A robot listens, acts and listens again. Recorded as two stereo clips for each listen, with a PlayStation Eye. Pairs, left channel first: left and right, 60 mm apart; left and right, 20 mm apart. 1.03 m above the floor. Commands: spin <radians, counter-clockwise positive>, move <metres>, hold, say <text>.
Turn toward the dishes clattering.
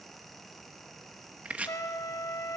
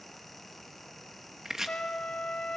hold
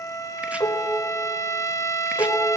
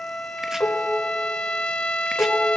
spin 1.13
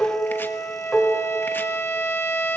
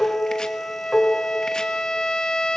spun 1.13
say Found it: dishes clattering, straight ahead, 2 to 4 m away.